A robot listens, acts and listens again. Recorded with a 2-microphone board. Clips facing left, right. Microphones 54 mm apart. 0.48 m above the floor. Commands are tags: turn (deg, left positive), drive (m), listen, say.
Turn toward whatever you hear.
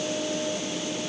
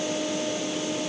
<listen/>
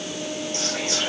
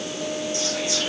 <turn deg="50"/>
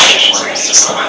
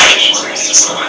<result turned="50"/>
<turn deg="70"/>
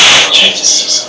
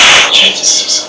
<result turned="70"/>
<say>Facing the whispering.</say>